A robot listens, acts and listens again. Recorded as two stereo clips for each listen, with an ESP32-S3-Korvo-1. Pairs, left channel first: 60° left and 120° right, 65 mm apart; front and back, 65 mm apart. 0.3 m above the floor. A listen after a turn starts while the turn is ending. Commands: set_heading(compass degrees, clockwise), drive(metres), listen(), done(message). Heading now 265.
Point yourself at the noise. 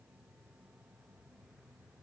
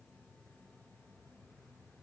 listen()
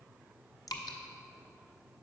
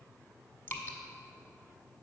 set_heading(210)
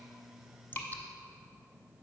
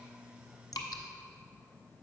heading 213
done("Facing the dripping, 1 to 2 m away.")